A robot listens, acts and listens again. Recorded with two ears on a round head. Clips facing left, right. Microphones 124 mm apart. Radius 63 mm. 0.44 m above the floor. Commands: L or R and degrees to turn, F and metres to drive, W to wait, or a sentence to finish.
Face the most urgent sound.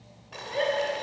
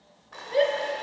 R45
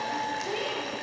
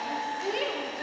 R80
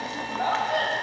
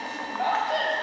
R10
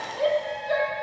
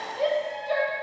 Facing the shout.